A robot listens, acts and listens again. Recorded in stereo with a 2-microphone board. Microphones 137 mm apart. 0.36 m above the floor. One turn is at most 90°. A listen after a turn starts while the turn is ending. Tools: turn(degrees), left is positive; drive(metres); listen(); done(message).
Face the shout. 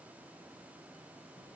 listen()
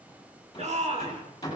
turn(degrees=-55)
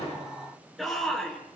done("Found it: a shout, straight ahead.")